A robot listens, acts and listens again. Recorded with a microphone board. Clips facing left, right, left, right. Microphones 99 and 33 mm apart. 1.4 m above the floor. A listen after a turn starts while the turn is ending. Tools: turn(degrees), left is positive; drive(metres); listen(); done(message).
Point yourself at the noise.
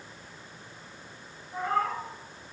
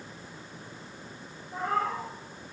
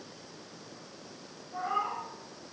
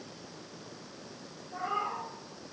turn(degrees=-30)
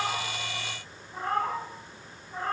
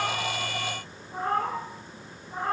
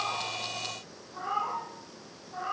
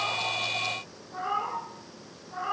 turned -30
turn(degrees=-20)
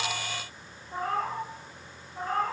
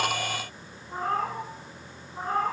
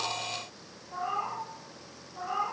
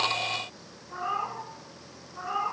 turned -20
turn(degrees=-155)
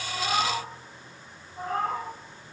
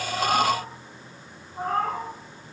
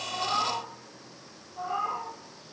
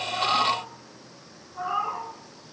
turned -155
turn(degrees=-50)
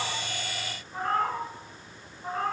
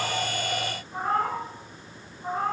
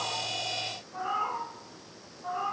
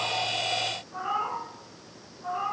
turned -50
turn(degrees=-10)
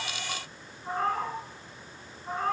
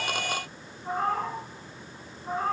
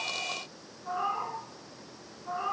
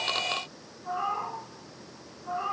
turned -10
done("Facing the cat meowing, 2 to 4 m away.")